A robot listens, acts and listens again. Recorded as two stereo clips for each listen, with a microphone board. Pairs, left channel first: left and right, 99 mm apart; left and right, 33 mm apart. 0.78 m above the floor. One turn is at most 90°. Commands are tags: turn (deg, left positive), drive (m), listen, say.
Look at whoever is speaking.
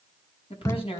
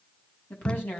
<turn deg="90"/>
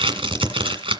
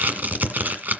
<listen/>
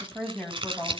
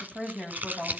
<turn deg="10"/>
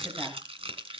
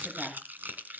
<listen/>
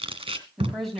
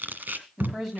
<say>Found it: a woman speaking, straight ahead.</say>